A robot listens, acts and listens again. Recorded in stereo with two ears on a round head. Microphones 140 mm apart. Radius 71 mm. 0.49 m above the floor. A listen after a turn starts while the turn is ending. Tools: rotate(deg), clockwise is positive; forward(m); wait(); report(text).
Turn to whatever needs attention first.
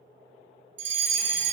rotate(50)
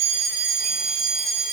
report("Found it: a fire alarm, straight ahead, over 4 m away.")